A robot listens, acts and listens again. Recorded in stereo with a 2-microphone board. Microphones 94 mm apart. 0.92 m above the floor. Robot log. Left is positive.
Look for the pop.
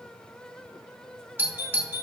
cmd idle
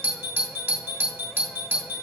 cmd idle
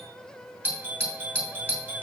end: I can't make out a pop to turn to.